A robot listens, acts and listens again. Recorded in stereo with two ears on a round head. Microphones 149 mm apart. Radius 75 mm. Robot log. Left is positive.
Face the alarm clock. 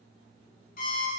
note: The alarm clock: about 55° left or 125° left.
cmd yaw +55
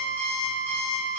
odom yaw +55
note: So it is at 15° left.
cmd yaw +15
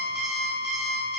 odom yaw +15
end: Facing the alarm clock, under 1 m away.